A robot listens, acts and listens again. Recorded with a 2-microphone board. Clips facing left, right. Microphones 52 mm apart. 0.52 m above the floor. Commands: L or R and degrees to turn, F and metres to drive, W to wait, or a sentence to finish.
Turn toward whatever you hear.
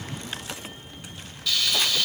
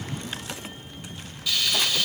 R30
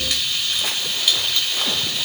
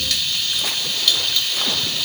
L15
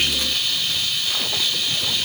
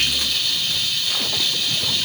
L10
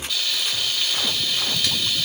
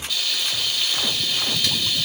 Found it: frying, straight ahead.